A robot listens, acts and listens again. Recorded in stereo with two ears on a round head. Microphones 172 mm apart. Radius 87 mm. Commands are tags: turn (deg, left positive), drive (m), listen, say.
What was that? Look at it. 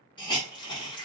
<turn deg="25"/>
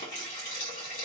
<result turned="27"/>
<turn deg="120"/>
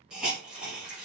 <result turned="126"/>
<say>Found it: a hiss, straight ahead.</say>